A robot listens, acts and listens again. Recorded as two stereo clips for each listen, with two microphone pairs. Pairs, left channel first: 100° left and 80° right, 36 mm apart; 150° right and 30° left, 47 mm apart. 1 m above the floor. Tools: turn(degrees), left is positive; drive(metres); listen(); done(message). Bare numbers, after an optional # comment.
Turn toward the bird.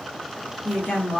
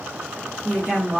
listen()
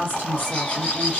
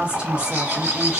# The bird: 55° left.
turn(55)
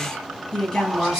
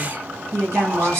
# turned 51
listen()
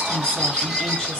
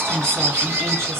done("Found it: a bird, straight ahead, 1 to 2 m away.")